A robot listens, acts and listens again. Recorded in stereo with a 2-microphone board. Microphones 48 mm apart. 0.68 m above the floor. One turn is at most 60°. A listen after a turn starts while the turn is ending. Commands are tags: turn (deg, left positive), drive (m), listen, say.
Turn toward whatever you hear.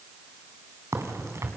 <turn deg="-60"/>
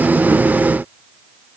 <turn deg="-30"/>
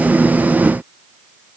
<say>I heard a crack from this way, but can't make it out now.</say>